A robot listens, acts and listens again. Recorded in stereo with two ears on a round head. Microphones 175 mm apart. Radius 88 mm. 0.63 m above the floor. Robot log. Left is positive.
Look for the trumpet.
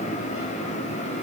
cmd idle
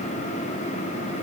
cmd idle
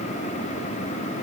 end: I can't make out a trumpet to turn to.